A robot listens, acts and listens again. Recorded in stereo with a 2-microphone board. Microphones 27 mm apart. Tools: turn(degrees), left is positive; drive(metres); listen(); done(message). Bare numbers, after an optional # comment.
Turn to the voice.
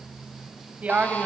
# The woman speaking: about 55° right or 125° right.
turn(-55)
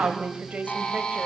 # So it is at 70° right.
turn(-70)
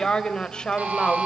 # The woman speaking is now 20° left.
turn(20)
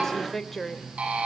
done("Found it: a woman speaking, straight ahead.")